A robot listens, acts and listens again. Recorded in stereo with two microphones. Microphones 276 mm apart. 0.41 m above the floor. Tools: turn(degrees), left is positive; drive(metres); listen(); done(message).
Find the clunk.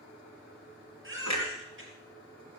turn(degrees=-70)
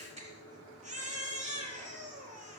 listen()
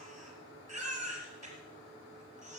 done("I heard a clunk, but can't make it out now. It was about straight ahead or 40° right.")